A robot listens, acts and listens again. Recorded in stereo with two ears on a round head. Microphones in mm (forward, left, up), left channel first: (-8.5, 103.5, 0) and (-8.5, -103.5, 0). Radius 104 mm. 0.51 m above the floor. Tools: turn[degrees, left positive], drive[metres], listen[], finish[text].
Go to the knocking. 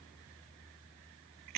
Action: listen[]
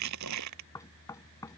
Action: turn[30]
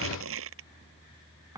Thought: So it is at 15° right.
Action: turn[-15]
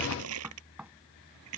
Action: drive[1.0]
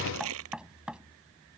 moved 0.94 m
Action: drive[1.0]
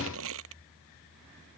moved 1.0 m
Action: listen[]
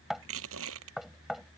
Action: drive[1.0]
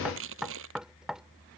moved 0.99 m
Action: drive[1.0]
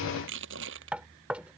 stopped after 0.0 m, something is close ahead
Action: finish[Arrived at the knocking, straight ahead.]